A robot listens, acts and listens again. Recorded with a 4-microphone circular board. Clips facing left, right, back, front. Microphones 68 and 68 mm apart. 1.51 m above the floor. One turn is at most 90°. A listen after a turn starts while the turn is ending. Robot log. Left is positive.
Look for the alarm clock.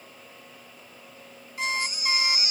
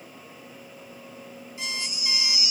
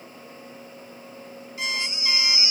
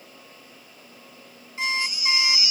note: The alarm clock: 55° left.
cmd yaw +55
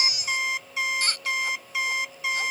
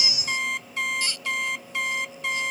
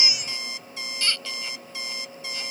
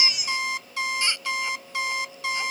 end: Facing the alarm clock.